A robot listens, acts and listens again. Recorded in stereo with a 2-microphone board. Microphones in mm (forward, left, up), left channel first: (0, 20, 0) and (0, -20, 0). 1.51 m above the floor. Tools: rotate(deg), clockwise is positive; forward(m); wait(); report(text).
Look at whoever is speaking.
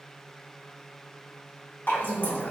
rotate(-65)
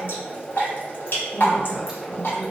report("Found it: a woman speaking, straight ahead, 1 to 2 m away.")